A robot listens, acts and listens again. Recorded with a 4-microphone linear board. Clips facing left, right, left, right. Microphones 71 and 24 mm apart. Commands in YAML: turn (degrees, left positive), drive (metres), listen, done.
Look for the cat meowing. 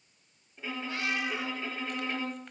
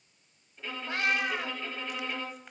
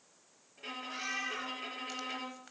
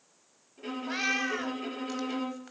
turn: -55
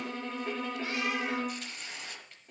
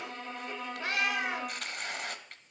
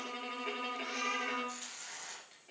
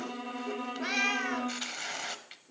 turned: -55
turn: -65
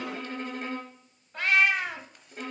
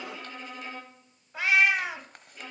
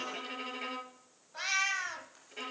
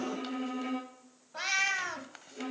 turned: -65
done: "Facing the cat meowing."